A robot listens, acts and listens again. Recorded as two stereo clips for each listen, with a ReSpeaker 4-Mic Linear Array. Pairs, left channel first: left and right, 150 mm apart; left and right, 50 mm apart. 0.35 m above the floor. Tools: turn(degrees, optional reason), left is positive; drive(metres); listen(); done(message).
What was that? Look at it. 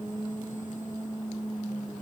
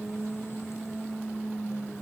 listen()
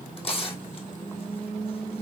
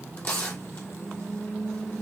turn(degrees=40, reason="The tearing paper: about 40° left or 140° left.")
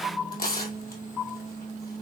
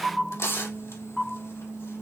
turn(degrees=105, reason="So it is at 105° left.")
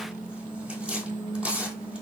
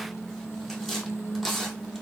turn(degrees=-10, reason="The tearing paper is now 10° right.")
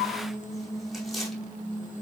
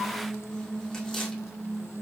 listen()
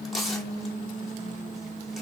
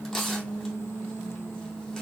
done("Found it: tearing paper, straight ahead, 2 to 4 m away.")